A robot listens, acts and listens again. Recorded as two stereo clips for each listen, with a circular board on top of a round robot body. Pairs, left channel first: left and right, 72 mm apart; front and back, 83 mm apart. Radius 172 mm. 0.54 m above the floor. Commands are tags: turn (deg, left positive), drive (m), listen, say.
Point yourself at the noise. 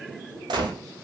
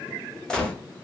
<turn deg="-85"/>
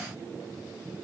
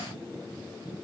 <say>I heard a gunshot from this way, but can't make it out now.</say>